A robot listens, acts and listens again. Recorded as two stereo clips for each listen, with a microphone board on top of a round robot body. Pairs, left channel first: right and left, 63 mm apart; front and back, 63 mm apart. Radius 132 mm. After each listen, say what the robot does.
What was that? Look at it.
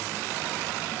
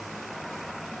Keep listening.
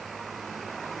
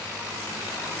Keep listening.
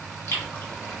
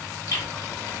Turn 35° right.
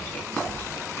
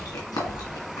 Turn 20° right.
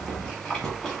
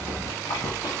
Facing the chewing, 1 to 2 m away.